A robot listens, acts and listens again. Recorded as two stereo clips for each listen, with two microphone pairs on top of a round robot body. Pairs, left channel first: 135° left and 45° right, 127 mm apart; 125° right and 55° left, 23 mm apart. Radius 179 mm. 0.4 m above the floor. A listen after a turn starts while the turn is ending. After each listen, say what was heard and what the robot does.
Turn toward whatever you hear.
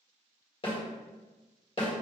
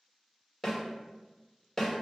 The snare drum: 170° left. Turn 170° left.
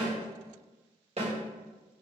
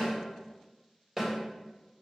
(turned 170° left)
The snare drum is now 25° right. Turn 25° right.
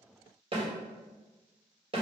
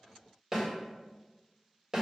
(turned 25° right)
The snare drum is now 15° right. Turn 15° right.
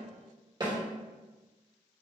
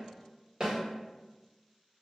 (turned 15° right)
Facing the snare drum, 1 to 2 m away.